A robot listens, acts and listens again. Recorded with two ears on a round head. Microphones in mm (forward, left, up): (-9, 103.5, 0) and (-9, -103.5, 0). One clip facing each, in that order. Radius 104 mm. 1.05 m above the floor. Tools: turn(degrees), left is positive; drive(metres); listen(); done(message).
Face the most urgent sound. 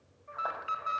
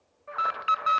turn(degrees=-75)
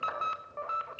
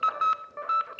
turn(degrees=-25)
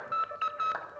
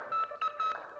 done("Facing the alarm, 1 to 2 m away.")